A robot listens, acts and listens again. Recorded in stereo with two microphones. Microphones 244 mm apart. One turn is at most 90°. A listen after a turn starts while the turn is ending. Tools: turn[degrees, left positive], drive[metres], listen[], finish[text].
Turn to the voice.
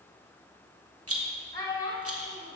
Thought: The child speaking: about 15° left or 165° left.
Action: turn[15]
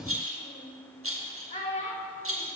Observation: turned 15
Thought: So it is at 150° left.
Action: turn[90]
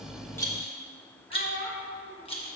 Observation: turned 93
Thought: The child speaking is now 55° left.
Action: turn[55]
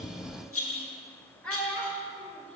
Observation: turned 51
Action: finish[Facing the child speaking, 1 to 2 m away.]